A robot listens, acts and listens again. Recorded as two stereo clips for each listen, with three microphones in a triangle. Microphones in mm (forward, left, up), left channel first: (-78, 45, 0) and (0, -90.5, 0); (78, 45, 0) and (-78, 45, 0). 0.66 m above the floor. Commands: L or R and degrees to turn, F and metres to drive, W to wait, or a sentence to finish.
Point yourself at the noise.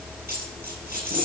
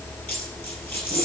R80
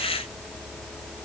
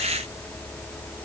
I heard a dropped coin from this way, but can't make it out now.